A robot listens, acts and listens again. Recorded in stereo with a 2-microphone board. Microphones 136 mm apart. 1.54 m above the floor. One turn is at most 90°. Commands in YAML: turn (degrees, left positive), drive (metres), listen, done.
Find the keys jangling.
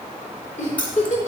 turn: 30
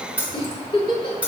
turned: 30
turn: -10
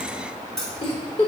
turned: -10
done: "Facing the keys jangling."